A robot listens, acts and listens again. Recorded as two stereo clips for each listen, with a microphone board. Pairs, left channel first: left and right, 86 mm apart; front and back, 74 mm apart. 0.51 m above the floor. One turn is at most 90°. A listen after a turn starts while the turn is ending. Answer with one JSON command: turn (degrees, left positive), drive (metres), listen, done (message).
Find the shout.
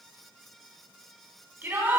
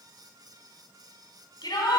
{"turn": -25}
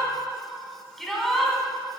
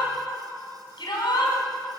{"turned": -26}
{"done": "Found it: a shout, straight ahead, 2 to 4 m away."}